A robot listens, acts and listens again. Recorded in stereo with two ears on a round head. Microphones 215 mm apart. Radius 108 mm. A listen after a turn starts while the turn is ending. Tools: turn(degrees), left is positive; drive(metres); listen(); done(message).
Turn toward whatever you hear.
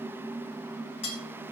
turn(degrees=25)
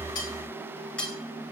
done("Found it: cutlery clinking, straight ahead.")